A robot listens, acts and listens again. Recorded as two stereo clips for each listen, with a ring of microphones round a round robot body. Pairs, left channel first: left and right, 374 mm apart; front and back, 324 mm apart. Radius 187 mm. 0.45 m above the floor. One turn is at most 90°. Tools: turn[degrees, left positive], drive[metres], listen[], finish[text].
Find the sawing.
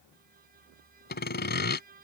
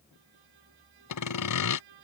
Thought: The sawing: 25° left.
Action: turn[25]
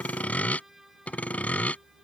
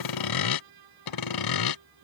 Action: finish[Facing the sawing.]